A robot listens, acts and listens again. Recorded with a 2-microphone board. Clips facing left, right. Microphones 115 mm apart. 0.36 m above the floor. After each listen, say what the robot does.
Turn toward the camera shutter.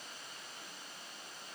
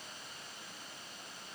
Keep listening.
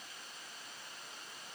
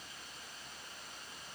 Keep listening.
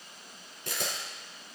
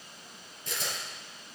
Turn 70° left.
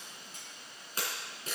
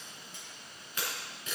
Turn 40° left.
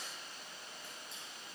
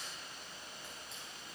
Keep listening.
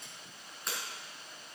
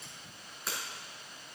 Found it: a camera shutter, straight ahead.